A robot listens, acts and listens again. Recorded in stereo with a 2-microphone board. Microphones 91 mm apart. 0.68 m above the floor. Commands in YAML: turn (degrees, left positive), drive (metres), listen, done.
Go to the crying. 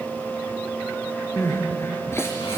turn: 30
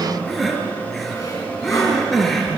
drive: 1.0
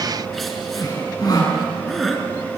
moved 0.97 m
drive: 1.0
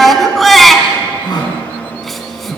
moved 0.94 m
drive: 1.0
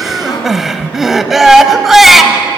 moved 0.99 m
drive: 1.0
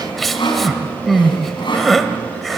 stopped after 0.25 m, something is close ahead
done: "I am next to the crying."